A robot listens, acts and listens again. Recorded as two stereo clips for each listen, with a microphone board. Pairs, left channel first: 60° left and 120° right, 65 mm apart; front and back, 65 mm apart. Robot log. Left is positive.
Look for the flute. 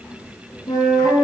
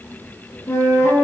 note: The flute: 45° left.
cmd yaw +45
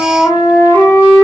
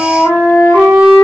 note: The flute is now 25° left.
cmd yaw +25
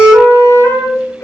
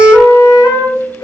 note: The flute is now 20° left.
cmd yaw +20
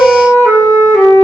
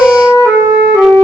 end: Found it: a flute, straight ahead, 2 to 4 m away.